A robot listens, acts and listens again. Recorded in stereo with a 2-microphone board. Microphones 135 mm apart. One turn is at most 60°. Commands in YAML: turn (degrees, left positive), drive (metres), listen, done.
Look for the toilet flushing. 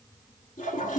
turn: 60
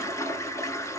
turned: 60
turn: 25
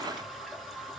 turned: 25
done: "Facing the toilet flushing."